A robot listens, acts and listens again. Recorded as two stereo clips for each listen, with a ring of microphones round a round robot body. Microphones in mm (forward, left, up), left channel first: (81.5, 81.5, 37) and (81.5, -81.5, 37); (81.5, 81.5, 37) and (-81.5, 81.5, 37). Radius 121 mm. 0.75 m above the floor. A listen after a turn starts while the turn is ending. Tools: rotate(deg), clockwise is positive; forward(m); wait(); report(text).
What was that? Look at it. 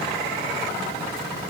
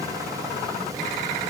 wait()
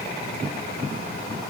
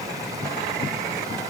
wait()
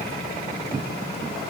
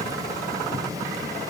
report("I can't make out anything to turn to.")